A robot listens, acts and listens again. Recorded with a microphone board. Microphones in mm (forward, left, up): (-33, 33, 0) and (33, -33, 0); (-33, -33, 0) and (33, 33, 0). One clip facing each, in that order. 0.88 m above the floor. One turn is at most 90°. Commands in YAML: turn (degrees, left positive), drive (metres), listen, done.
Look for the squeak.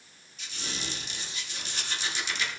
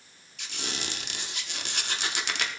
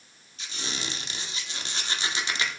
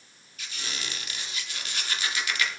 turn: -70
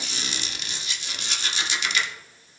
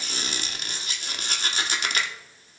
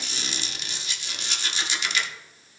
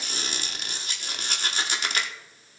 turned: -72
done: "Found it: a squeak, straight ahead."